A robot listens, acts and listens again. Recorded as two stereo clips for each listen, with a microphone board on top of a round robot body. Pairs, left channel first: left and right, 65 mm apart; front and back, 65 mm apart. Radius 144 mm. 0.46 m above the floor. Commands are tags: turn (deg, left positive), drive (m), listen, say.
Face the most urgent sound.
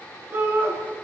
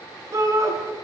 <turn deg="-140"/>
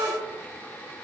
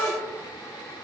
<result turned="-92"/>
<turn deg="-50"/>
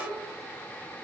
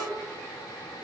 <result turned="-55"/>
<listen/>
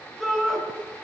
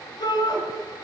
<say>Found it: a shout, straight ahead, over 4 m away.</say>